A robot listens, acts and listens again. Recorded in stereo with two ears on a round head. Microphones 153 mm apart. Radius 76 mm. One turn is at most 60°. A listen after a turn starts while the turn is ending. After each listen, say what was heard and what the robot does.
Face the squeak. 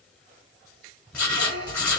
The squeak: about 70° right or 110° right. Turn 60° right.
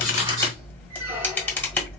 Keep listening.
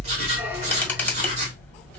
Keep listening.
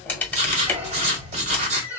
So it is at 15° right. Turn 15° right.
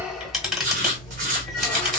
Keep listening.
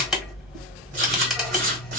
Keep listening.
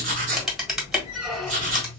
Facing where the squeak came from. I can't hear it now.